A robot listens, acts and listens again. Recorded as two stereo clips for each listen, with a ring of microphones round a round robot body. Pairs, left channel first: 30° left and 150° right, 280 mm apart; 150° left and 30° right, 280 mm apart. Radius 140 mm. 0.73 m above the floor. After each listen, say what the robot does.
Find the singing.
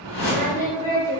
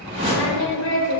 Turn 100° left.
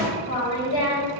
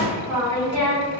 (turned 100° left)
Facing the singing, 1 to 2 m away.